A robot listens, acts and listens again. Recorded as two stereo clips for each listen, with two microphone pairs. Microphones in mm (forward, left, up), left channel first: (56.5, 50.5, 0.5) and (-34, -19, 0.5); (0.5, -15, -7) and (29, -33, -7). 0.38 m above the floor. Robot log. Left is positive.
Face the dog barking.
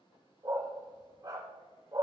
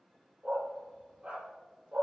note: The dog barking: 85° right.
cmd yaw -85
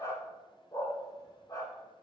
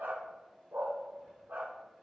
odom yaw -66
note: The dog barking is now 15° right.
cmd yaw -15
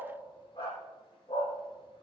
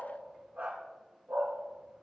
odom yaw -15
end: Facing the dog barking.